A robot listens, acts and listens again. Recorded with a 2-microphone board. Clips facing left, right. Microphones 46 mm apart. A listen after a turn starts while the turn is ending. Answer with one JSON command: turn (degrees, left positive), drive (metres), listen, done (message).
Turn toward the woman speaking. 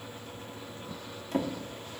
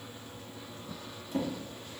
{"listen": true}
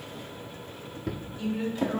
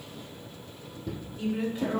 {"turn": -20}
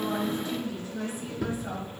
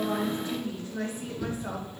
{"turn": -140}
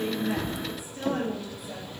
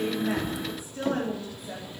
{"turn": -45}
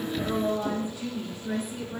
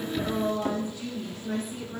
{"turn": 10}
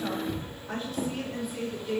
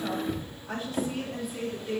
{"done": "Found it: a woman speaking, straight ahead."}